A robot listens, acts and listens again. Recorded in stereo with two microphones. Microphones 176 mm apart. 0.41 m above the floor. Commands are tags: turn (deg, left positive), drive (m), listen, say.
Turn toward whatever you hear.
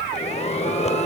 <turn deg="35"/>
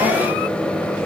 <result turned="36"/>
<say>Found it: a microwave, straight ahead.</say>